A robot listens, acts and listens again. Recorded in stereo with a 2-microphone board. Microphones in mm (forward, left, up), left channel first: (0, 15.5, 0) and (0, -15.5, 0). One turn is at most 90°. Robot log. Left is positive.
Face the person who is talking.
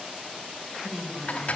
note: The woman speaking: about 30° right or 150° right.
cmd yaw -30
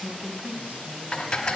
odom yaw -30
note: So it is at 115° right.
cmd yaw -90
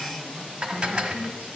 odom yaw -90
note: The woman speaking is now 45° right.
cmd yaw -45
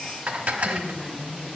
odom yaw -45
note: The woman speaking is now 15° right.
cmd yaw -15
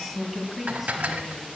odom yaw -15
end: Facing the woman speaking.